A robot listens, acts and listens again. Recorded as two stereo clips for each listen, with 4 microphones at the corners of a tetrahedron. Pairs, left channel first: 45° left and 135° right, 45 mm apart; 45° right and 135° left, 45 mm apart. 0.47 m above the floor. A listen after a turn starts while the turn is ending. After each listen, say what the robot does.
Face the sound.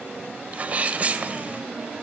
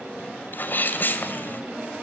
Turn 80° right.
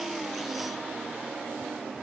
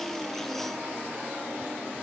I heard a sneeze from this way, but can't make it out now.